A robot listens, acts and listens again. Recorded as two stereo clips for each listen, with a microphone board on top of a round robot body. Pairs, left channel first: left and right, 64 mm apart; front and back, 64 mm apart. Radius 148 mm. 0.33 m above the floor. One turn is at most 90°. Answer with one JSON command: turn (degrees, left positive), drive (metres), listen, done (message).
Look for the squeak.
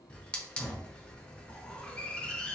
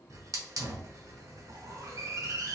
{"listen": true}
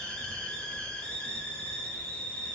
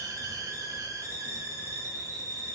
{"listen": true}
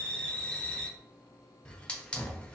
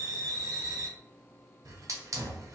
{"done": "I can't make out a squeak to turn to."}